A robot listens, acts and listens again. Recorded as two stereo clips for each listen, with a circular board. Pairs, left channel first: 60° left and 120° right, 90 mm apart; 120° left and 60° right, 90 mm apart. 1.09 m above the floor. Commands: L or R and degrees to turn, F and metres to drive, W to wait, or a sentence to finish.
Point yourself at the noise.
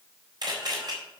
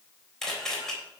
R155
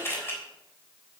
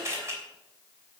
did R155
Facing the camera shutter, 2 to 4 m away.